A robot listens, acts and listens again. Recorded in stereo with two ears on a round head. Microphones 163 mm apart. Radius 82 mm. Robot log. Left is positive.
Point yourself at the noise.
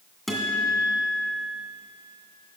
cmd yaw +30
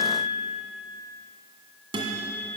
note: So it is at 30° right.
cmd yaw -30
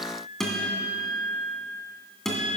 end: Facing the guitar.